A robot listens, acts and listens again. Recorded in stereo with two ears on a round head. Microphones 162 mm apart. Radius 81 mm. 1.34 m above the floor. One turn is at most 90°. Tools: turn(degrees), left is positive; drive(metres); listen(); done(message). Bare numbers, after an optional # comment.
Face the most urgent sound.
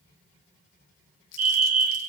# The fire alarm: about 45° right or 135° right.
turn(-45)
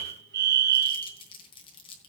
# So it is at 80° right.
turn(-80)
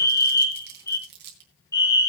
# The fire alarm is now 20° left.
turn(20)
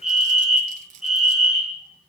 done("Facing the fire alarm.")